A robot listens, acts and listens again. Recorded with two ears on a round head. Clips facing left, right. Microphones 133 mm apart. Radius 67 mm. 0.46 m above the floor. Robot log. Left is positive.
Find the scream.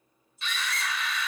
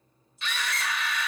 note: The scream: about 55° right or 125° right.
cmd yaw -55
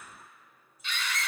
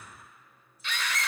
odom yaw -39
note: So it is at 70° right.
cmd yaw -70
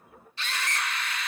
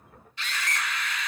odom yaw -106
note: The scream is now 35° left.
cmd yaw +35
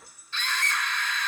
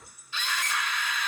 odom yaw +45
note: The scream is now 10° right.
cmd yaw -10
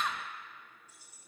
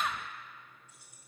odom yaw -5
end: Facing the scream.